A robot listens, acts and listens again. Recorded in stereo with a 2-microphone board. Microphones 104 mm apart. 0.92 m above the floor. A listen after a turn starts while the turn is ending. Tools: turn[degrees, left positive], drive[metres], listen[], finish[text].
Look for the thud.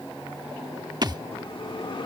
Thought: The thud: about 40° right or 140° right.
Action: turn[-40]
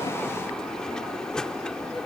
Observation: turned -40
Action: listen[]
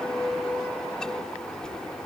Action: finish[I heard a thud, but can't make it out now. It was about straight ahead or 100° right.]